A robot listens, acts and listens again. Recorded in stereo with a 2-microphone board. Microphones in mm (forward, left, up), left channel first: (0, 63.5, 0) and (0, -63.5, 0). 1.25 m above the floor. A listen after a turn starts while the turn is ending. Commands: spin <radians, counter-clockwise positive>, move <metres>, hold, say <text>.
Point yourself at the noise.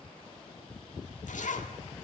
spin 1.57
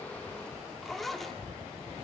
say Facing the zipper, 1 to 2 m away.